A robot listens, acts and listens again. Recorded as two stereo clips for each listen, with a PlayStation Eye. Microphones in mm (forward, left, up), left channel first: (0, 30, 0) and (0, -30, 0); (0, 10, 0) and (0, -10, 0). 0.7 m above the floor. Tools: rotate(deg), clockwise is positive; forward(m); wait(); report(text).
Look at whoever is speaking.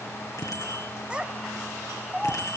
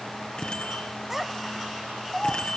rotate(30)
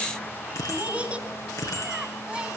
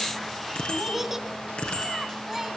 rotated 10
rotate(15)
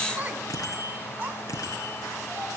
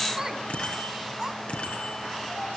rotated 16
rotate(30)
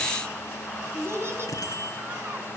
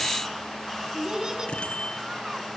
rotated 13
rotate(135)
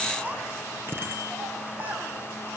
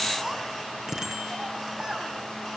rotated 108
rotate(30)
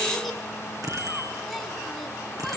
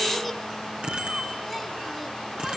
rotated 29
wait()
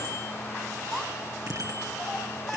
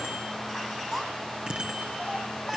report("Found it: a child speaking, straight ahead, over 4 m away.")